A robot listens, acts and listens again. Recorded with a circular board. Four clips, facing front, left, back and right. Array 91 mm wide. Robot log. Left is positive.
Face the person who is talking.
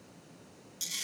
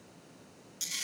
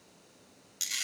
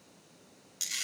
cmd idle
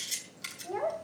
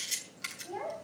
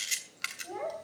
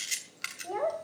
note: The child speaking: 85° right.
cmd yaw -85
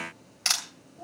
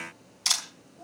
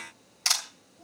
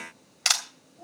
note: The child speaking is now 10° right.
cmd yaw -10
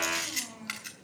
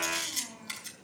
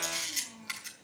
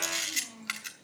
end: Facing the child speaking.